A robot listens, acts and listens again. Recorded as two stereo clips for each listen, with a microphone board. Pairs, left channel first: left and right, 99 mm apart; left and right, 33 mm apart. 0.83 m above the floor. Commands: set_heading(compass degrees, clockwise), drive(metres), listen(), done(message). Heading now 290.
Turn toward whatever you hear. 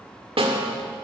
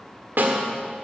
set_heading(0)
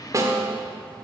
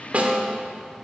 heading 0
set_heading(35)
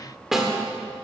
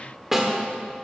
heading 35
done("Facing the snare drum, 1 to 2 m away.")